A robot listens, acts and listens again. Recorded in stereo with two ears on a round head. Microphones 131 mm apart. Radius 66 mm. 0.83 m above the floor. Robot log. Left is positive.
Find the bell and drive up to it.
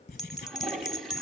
cmd yaw +30
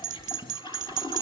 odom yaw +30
note: So it is at 30° right.
cmd yaw -30
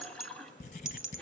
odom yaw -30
cmd fwd 1.0
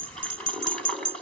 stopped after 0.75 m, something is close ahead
end: Something is in my way. I am facing the bell but have not reached it.